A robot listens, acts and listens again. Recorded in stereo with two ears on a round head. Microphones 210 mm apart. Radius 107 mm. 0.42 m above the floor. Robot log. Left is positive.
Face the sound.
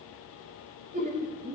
note: The laughter: about 35° right or 145° right.
cmd yaw -35
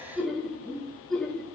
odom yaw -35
end: Facing the laughter.